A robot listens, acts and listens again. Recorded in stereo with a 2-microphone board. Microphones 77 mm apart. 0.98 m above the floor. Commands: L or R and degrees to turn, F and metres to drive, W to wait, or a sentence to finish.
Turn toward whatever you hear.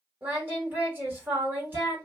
R25
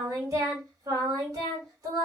R125
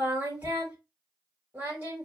R20
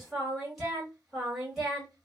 Facing the singing.